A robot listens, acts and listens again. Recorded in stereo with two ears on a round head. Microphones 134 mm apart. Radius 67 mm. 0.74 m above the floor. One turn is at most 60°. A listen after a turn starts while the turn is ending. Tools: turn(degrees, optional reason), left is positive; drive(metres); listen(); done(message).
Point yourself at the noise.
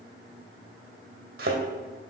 turn(degrees=-60, reason="The thud: about 70° right or 110° right.")
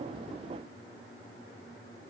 listen()
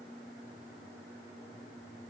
done("I heard a thud, but can't make it out now. It was about 10° right or 50° right.")